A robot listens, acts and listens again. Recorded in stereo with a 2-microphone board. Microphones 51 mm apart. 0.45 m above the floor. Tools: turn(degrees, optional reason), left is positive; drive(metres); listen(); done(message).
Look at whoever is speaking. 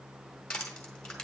listen()
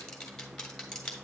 listen()
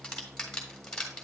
done("I can't make out anyone speaking to turn to.")